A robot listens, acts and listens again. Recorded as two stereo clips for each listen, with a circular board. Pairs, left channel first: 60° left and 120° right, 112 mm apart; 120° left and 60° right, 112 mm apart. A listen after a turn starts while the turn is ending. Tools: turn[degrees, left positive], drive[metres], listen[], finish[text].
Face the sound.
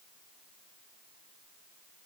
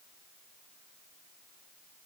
Action: listen[]
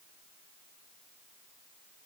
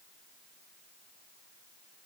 Action: listen[]
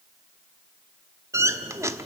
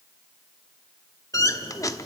Thought: The squeak: straight behind.
Action: turn[180]
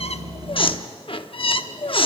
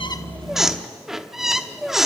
Thought: The squeak is now 25° left.
Action: turn[25]
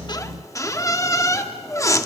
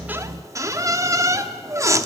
Action: finish[Facing the squeak, under 1 m away.]